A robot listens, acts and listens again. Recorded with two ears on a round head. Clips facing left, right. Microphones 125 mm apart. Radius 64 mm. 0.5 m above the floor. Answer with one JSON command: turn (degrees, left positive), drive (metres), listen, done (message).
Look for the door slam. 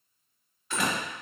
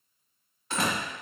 {"turn": -30}
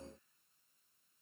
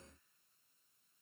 {"listen": true}
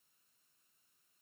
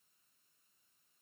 {"done": "I heard a door slam, but can't make it out now. It was about straight ahead or 120° right."}